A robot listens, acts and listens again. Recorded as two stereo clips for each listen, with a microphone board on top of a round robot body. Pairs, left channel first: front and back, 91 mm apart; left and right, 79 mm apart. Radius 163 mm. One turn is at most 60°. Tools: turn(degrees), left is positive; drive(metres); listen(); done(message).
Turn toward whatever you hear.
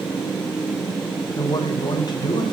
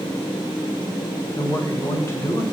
turn(degrees=35)
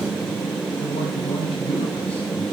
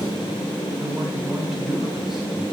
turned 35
listen()
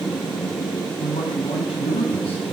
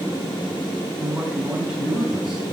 done("Found it: a man speaking, straight ahead.")